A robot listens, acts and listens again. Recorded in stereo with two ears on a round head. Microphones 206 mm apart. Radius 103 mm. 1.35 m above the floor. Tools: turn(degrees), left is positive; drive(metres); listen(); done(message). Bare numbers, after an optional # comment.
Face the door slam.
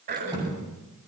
# The door slam: about 20° right or 160° right.
turn(-20)
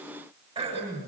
listen()
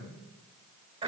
done("I heard a door slam, but can't make it out now. It was about straight ahead or 140° right.")